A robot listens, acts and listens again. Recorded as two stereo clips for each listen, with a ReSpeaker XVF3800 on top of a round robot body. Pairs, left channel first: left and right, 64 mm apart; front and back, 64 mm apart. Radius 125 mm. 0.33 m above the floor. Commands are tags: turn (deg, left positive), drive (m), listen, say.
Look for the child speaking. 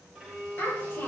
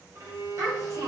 <turn deg="150"/>
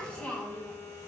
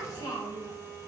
<turn deg="20"/>
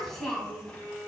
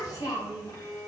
<turn deg="10"/>
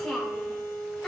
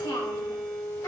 <turn deg="10"/>
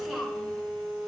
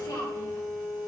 <say>Facing the child speaking, 2 to 4 m away.</say>